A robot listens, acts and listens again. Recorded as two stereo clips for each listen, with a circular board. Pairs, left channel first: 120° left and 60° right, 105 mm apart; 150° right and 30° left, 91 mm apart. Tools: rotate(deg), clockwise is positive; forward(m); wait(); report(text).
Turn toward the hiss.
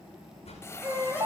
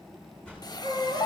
rotate(-180)
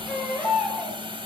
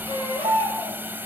rotate(35)
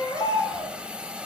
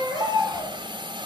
rotate(-20)
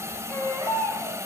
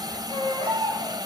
report("Found it: a hiss, straight ahead, 1 to 2 m away.")